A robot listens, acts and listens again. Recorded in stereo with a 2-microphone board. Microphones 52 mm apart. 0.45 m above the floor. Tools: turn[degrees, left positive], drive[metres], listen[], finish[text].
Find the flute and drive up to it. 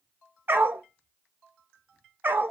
Action: listen[]
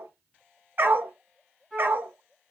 Action: turn[30]
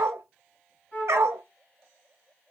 Thought: So it is at 140° left.
Action: turn[140]
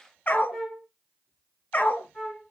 Action: drive[1.0]
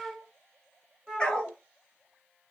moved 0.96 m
Action: drive[1.0]
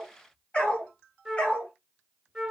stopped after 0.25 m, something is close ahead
Action: finish[Arrived at the flute, straight ahead.]